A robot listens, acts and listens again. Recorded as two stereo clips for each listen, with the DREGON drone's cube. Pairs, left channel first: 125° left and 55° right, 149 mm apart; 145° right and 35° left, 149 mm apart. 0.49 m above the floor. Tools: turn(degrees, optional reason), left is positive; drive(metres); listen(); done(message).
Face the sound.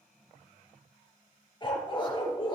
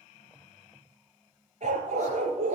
turn(degrees=70, reason="The dog barking: 70° left.")
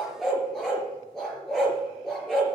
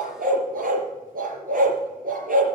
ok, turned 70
turn(degrees=35, reason="The dog barking is now 35° left.")
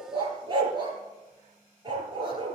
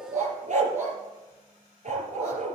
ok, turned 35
done("Found it: a dog barking, straight ahead.")